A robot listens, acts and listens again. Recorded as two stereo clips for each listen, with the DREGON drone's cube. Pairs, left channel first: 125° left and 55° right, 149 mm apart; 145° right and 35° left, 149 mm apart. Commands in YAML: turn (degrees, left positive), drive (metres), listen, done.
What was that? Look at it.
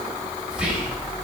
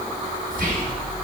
turn: 25
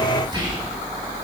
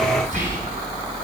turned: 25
done: "Facing the whispering, 2 to 4 m away."